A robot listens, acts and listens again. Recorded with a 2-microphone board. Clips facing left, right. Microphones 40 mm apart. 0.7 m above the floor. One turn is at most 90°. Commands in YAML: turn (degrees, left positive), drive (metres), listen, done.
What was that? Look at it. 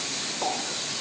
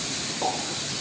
turn: 30
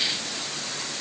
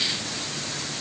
listen: true
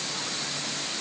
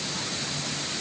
done: "I heard a pop, but can't make it out now. It was about 25° right or 145° left."